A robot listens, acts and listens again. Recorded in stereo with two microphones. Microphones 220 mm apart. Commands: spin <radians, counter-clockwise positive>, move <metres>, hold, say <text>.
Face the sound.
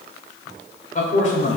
spin 0.52
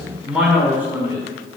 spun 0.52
spin -0.17
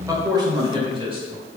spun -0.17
spin -0.52
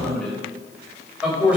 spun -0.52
say Found it: a man speaking, straight ahead.